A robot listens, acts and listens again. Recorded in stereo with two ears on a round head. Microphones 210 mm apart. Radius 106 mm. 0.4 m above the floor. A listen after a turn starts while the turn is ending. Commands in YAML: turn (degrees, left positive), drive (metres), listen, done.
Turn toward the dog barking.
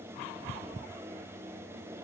listen: true
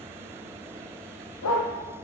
turn: 90
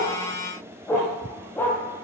done: "Found it: a dog barking, straight ahead."